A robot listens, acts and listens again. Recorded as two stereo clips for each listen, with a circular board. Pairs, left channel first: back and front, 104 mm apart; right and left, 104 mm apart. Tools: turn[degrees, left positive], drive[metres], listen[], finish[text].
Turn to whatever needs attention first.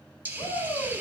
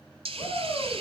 Thought: The shout: 135° right.
Action: turn[-135]
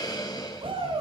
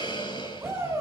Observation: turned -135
Thought: The shout is now 25° left.
Action: turn[25]
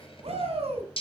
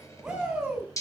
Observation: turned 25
Action: finish[Facing the shout, over 4 m away.]